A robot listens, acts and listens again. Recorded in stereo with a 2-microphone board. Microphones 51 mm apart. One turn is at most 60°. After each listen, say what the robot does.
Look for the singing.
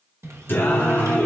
Turn 35° left.
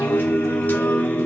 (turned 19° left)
Turn 35° left.
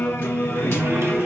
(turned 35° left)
Turn 60° left.
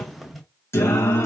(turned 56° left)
Turn 60° left.
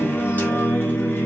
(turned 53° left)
Turn 30° left.
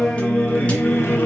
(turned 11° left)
Turn 25° left.
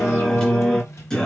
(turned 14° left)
Turn 10° left.
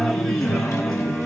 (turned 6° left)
Facing the singing.